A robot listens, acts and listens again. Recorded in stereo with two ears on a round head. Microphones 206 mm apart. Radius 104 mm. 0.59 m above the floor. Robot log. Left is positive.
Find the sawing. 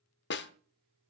cmd idle
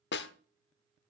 cmd idle
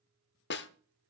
end: I can't make out sawing to turn to.